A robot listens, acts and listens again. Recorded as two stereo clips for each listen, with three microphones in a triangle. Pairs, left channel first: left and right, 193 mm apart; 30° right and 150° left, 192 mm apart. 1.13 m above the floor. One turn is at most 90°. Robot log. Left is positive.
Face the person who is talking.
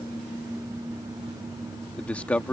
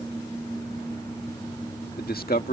end: Facing the man speaking.